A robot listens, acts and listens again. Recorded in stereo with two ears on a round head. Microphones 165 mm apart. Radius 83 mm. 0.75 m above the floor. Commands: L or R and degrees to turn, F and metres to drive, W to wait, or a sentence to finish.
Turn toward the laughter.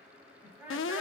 R30
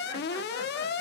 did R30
W
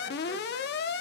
W
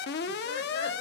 I heard laughter, but can't make it out now. It was about 20° left or 140° right.